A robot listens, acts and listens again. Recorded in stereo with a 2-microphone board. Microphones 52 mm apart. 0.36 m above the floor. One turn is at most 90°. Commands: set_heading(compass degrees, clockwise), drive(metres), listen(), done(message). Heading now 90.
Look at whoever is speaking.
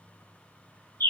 listen()
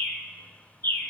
listen()
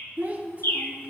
set_heading(120)
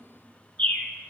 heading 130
listen()
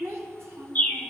set_heading(220)
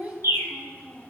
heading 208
set_heading(238)
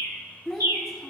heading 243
done("Facing the child speaking.")